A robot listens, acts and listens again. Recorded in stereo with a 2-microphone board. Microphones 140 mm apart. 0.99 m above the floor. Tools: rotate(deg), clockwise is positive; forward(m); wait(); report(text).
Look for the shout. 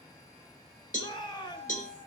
rotate(-35)
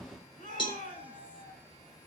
rotate(-105)
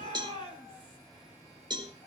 rotate(-35)
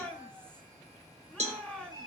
rotate(-10)
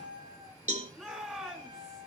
report("Found it: a shout, straight ahead, 2 to 4 m away.")